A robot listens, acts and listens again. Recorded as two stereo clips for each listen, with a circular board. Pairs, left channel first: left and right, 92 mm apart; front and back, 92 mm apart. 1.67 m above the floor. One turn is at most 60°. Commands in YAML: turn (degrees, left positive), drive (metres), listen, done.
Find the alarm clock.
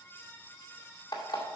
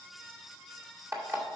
turn: 60
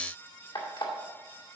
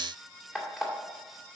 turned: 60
turn: 60
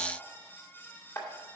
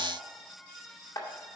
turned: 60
turn: 45
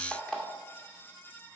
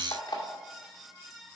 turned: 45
done: "Found it: an alarm clock, straight ahead, 2 to 4 m away."